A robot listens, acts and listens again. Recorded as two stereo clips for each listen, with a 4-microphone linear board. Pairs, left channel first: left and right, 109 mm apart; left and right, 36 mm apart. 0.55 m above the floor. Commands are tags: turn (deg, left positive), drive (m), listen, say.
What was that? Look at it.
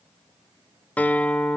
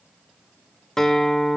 <turn deg="30"/>
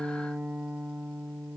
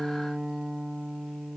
<turn deg="-15"/>
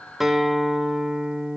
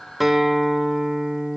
<say>Facing the guitar, 2 to 4 m away.</say>